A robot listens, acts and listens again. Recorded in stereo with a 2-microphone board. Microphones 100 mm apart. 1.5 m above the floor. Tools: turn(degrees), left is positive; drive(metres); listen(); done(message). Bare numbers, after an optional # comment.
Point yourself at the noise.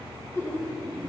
# The laughter: about 30° left or 150° left.
turn(30)
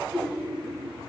done("Found it: laughter, straight ahead.")